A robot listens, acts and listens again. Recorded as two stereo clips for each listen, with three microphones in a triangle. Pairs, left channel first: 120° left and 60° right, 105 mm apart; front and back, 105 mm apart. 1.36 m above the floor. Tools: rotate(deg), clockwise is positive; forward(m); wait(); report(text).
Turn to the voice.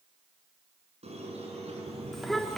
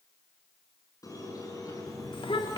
rotate(-30)
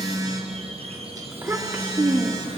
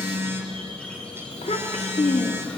rotate(-10)
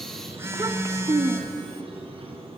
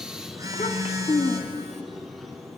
report("Found it: a child speaking, straight ahead.")